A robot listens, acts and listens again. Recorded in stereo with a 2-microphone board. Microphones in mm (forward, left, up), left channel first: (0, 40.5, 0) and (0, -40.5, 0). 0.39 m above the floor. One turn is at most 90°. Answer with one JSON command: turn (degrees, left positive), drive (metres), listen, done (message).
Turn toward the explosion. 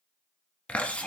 {"listen": true}
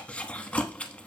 {"listen": true}
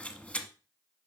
{"done": "I can't make out an explosion to turn to."}